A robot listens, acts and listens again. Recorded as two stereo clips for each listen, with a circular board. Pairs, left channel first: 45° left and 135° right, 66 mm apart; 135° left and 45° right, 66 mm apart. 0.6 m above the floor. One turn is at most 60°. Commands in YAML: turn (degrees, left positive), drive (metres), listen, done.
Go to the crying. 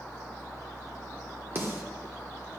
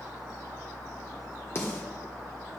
listen: true
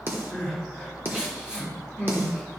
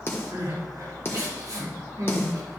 turn: -55
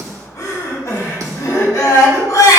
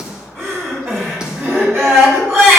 turn: 10
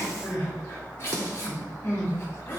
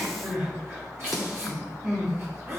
drive: 1.0
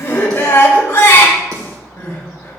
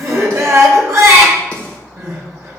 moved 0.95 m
drive: 1.0
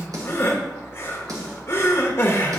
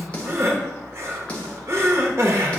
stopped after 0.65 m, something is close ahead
done: "I am next to the crying."